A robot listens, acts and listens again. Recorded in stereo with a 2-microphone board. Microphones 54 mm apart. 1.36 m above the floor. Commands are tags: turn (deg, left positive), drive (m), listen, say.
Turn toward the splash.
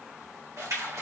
<turn deg="-65"/>
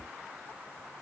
<listen/>
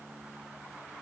<say>I heard a splash, but can't make it out now. It was about straight ahead or 50° right.</say>